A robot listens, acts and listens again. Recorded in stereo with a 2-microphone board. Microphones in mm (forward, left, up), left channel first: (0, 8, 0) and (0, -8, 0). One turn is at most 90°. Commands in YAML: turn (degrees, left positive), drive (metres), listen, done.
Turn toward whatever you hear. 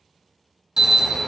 turn: -35
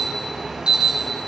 turn: -90
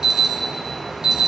turn: -45
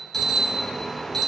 turn: 15
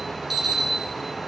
done: "Facing the alarm, 1 to 2 m away."